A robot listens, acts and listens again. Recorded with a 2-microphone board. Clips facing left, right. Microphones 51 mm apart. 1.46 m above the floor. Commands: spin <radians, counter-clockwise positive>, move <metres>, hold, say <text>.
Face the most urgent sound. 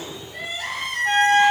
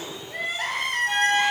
spin -0.96
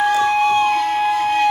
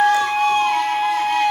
hold
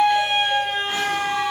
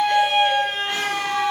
hold
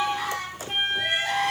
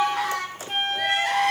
spin -1.22
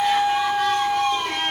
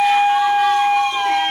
hold
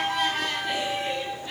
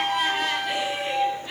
say Facing the crying, 2 to 4 m away.